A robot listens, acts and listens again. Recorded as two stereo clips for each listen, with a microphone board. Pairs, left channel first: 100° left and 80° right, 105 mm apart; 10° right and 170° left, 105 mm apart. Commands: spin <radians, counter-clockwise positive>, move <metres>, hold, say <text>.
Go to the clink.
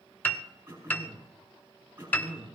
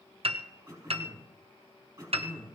hold
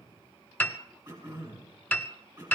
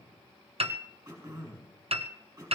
hold
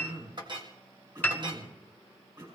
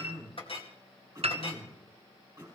spin -0.61
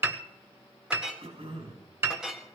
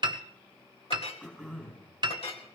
move 1.0
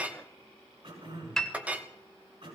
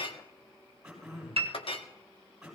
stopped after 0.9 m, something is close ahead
say I am next to the clink.